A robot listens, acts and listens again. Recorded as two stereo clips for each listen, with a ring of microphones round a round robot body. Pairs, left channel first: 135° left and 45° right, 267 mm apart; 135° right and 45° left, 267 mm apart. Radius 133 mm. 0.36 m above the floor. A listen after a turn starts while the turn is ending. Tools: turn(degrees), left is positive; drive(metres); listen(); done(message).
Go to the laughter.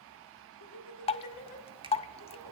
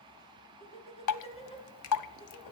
turn(degrees=155)
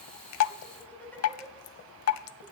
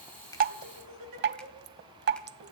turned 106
turn(degrees=50)
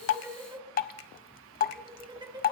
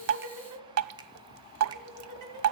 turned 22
turn(degrees=30)
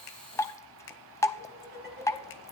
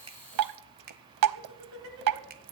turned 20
turn(degrees=10)
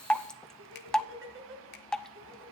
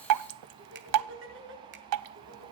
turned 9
drive(metres=1.0)
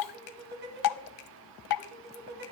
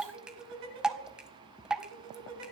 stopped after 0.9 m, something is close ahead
done("Blocked. The laughter is further on, straight ahead.")